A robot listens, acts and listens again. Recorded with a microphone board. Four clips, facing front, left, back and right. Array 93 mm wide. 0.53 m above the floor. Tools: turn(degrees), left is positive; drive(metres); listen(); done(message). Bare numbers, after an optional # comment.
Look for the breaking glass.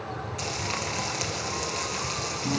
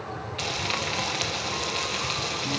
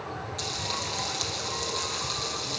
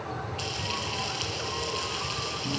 listen()
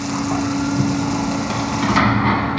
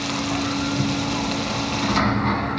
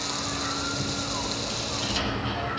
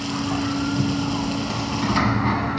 listen()
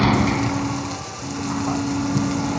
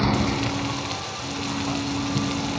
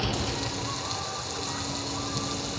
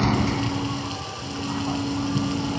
done("I can't make out breaking glass to turn to.")